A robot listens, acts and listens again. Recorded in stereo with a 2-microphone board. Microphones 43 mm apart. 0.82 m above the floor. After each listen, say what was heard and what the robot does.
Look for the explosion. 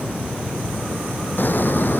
The explosion: about 55° left or 125° left. Turn 55° left.
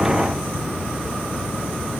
Keep listening.
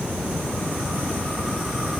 I heard an explosion, but can't make it out now. It was about straight ahead or 70° left.